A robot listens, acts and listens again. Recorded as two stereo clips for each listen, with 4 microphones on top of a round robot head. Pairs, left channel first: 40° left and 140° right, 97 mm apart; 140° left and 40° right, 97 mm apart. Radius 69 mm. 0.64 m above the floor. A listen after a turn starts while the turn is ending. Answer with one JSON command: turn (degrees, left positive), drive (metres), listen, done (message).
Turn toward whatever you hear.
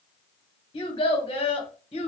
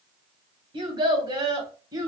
{"turn": 15}
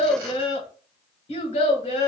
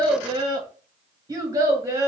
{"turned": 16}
{"turn": 25}
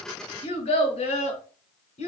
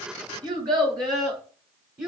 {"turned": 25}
{"turn": 30}
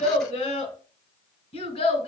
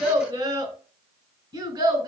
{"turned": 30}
{"turn": 10}
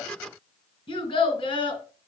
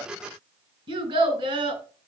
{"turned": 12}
{"done": "Found it: a child speaking, straight ahead."}